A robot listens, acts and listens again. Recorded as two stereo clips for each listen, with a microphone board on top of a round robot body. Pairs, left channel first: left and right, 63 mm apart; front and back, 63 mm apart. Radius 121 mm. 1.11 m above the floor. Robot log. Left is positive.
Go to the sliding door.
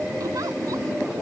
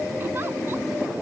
cmd idle
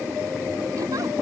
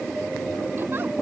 cmd idle
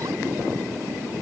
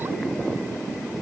end: I can't make out a sliding door to turn to.